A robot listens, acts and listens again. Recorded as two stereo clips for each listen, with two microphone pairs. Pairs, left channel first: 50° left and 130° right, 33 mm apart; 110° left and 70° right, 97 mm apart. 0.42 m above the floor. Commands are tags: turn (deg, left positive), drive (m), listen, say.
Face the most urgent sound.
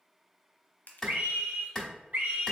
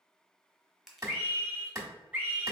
<turn deg="-140"/>
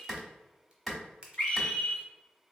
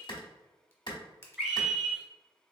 <turn deg="15"/>
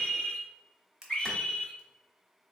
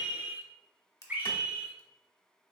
<say>Facing the scream.</say>